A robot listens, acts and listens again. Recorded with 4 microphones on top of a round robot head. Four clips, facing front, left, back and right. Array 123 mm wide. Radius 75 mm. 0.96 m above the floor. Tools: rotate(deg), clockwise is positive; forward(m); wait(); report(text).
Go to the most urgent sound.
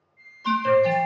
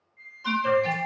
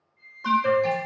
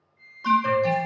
rotate(150)
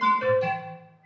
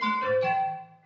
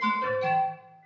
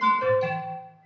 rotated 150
rotate(35)
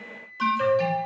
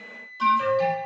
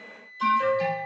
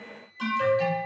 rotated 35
forward(1.0)
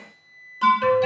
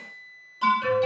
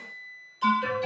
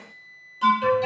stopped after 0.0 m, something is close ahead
report("Blocked. The alarm is further on, straight ahead.")